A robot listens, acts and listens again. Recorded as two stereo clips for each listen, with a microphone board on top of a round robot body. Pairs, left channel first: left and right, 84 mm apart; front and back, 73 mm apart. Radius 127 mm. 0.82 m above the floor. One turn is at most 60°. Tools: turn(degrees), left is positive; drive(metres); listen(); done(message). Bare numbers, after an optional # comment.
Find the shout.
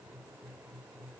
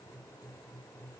listen()
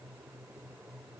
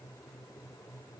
listen()
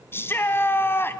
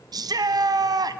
# The shout: 155° left.
turn(60)
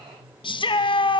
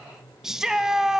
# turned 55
# The shout is now 95° left.
turn(60)
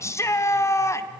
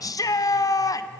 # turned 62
# The shout is now 35° left.
turn(35)
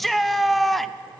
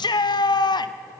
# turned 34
done("Facing the shout.")